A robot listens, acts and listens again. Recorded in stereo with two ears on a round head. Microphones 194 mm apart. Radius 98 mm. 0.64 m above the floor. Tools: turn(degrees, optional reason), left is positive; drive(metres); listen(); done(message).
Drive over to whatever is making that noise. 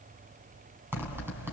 turn(degrees=-30)
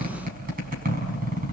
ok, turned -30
turn(degrees=-135, reason="So it is at 135° right.")
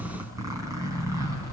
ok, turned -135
turn(degrees=-15, reason="The zipper is now 15° right.")
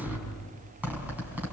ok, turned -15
turn(degrees=-10, reason="The zipper is now 10° right.")
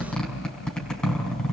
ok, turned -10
drive(metres=1.0)
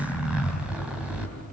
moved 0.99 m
drive(metres=1.0)
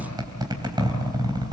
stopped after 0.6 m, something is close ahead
turn(degrees=-20, reason="The zipper is now 20° right.")
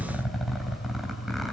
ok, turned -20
done("Something is in my way. I am facing the zipper but have not reached it.")